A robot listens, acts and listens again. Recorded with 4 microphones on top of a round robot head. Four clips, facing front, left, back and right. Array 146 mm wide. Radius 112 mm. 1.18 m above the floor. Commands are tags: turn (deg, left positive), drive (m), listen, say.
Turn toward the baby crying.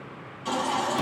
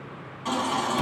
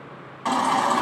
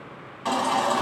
<turn deg="-160"/>
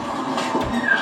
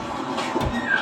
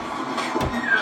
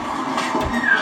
<turn deg="-50"/>
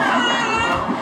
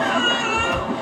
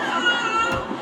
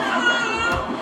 <say>Found it: a baby crying, straight ahead.</say>